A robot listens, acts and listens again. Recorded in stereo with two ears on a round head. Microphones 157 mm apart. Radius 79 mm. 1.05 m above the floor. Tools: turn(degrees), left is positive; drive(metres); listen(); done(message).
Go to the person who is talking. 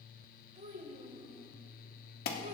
turn(degrees=-40)
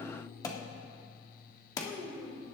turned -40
drive(metres=1.0)
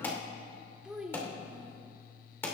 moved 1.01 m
drive(metres=1.0)
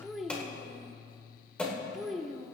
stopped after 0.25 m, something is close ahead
done("I am next to the child speaking.")